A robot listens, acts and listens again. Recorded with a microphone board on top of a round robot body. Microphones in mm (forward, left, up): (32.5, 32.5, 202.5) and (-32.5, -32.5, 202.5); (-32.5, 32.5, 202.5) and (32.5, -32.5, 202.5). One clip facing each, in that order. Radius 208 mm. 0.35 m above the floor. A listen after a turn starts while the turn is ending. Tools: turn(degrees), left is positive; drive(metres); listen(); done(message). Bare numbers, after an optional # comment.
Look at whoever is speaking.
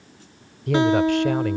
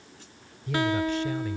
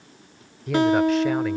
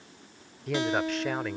# The man speaking: 45° left.
turn(45)
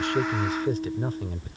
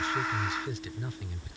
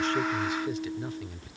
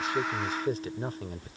done("Found it: a man speaking, straight ahead.")